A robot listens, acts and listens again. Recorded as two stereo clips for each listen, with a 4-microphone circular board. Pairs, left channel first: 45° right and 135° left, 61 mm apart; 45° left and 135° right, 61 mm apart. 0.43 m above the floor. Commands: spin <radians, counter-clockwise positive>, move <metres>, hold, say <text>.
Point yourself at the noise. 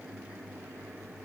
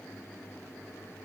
hold
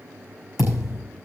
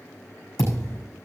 spin 0.96
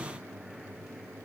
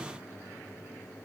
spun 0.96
say I heard a thud from this way, but can't make it out now.